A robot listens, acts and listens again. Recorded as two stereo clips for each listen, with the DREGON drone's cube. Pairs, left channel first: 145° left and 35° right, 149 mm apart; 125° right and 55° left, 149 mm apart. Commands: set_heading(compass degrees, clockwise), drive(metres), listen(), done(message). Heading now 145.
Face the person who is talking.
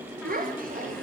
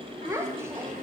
set_heading(160)
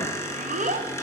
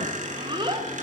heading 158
done("Found it: a child speaking, straight ahead, under 1 m away.")